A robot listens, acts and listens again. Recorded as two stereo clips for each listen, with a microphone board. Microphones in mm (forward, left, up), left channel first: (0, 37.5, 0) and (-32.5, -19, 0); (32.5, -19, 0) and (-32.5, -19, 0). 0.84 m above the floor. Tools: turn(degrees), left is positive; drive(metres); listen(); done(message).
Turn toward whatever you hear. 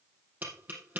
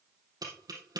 turn(degrees=175)
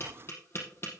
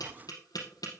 turn(degrees=10)
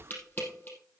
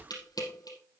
done("Found it: tapping, straight ahead, over 4 m away.")